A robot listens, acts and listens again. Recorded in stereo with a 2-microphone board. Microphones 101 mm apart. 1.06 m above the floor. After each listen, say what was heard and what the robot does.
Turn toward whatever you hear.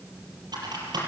The typing on a keyboard: about 45° right or 135° right. Turn 45° right.
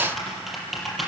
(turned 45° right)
Found it: typing on a keyboard, straight ahead.